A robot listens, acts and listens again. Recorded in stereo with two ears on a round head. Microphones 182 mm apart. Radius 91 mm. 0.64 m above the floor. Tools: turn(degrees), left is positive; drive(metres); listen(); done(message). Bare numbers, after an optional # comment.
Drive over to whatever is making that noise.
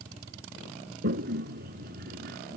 # The toilet flushing: about 55° right or 125° right.
turn(-55)
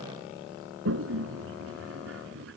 # So it is at 70° right.
turn(-70)
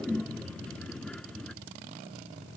drive(1.0)
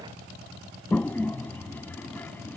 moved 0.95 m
# The toilet flushing is now 10° left.
turn(10)
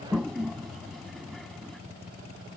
drive(1.0)
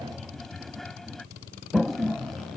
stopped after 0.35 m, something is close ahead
done("Arrived at the toilet flushing, straight ahead.")